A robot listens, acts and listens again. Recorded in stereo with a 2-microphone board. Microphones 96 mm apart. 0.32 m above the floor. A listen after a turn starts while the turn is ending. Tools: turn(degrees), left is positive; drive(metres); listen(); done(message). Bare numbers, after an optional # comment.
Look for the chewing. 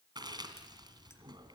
# The chewing: about 45° right or 135° right.
turn(-45)
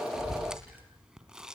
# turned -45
# So it is at 10° right.
turn(-10)
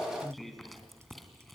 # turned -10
done("Facing the chewing.")